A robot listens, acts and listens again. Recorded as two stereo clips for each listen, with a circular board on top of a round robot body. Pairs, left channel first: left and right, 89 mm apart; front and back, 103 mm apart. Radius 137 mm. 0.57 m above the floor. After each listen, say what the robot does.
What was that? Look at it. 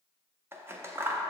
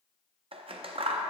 Turn 155° right.
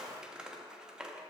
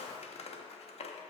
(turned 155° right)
Turn 10° right.
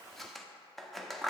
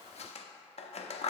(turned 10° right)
Found it: scissors, straight ahead.